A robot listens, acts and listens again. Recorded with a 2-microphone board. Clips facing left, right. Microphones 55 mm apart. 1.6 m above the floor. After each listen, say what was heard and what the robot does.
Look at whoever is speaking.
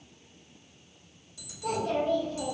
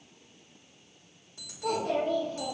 The child speaking: about 35° right or 145° right. Turn 35° right.
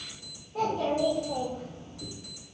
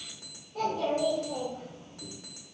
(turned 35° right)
So it is at 35° left. Turn 35° left.
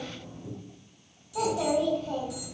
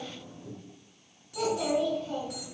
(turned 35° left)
The child speaking is now 35° left. Turn 35° left.
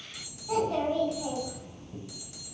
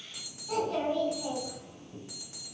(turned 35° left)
The child speaking is now 15° left. Turn 15° left.
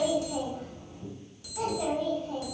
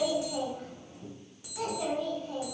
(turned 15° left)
Facing the child speaking, 2 to 4 m away.